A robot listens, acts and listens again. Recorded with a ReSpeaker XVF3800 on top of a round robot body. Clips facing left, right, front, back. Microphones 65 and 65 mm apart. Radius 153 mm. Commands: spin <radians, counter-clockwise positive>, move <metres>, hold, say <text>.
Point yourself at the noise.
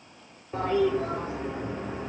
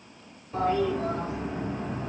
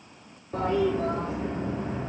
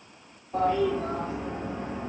spin 0.44
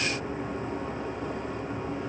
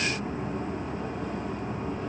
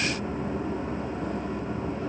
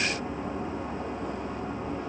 spin 0.35
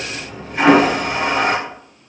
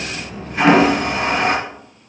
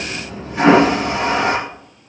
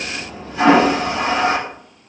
say Found it: a toilet flushing, straight ahead, 2 to 4 m away.